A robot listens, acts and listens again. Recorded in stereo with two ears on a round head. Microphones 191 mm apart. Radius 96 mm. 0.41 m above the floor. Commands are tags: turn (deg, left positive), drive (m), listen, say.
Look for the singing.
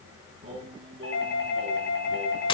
<turn deg="-25"/>
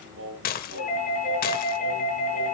<turn deg="-120"/>
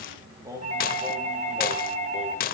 <turn deg="-15"/>
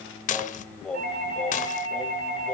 <say>Facing the singing, 2 to 4 m away.</say>